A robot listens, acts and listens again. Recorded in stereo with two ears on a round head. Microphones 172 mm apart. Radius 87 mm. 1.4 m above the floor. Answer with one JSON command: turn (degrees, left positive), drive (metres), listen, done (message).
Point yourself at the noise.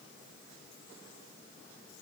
{"listen": true}
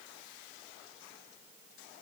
{"listen": true}
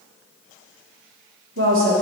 {"turn": -70}
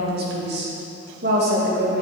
{"turn": -55}
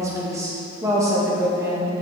{"turn": -15}
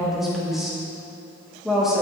{"done": "Found it: a woman speaking, straight ahead."}